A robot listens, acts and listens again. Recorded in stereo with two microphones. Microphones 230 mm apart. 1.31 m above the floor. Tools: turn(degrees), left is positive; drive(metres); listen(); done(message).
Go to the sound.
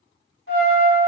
turn(degrees=60)
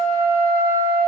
turn(degrees=10)
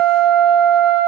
drive(metres=1.0)
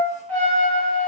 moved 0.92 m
turn(degrees=10)
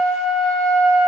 drive(metres=1.0)
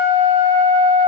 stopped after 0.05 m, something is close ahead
done("Arrived at the trumpet, straight ahead.")